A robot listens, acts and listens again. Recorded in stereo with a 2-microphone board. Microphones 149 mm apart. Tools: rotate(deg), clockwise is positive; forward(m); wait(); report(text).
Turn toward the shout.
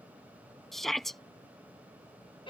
rotate(-30)
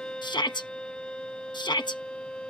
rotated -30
rotate(-150)
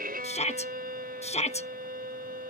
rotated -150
rotate(-50)
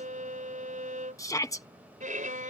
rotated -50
rotate(-25)
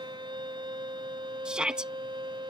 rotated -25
report("Found it: a shout, straight ahead.")